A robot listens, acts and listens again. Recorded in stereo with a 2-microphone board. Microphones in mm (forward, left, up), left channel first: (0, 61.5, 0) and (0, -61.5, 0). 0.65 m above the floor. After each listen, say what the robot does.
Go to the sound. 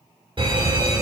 Turn 45° right.
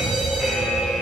Drive 1.0 m forward.
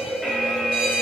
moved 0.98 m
Turn 10° right.
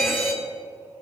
Drive 1.0 m forward.
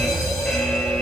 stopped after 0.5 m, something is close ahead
I am next to the fire alarm.